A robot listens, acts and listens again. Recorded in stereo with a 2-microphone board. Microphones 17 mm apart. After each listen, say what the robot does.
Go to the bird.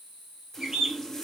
Turn 40° right.
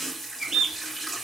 Turn 100° right.
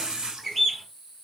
Drive 1.0 m forward.
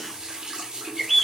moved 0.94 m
Drive 1.0 m forward.
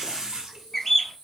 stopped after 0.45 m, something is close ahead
Turn 15° left.
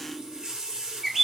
Arrived at the bird, straight ahead.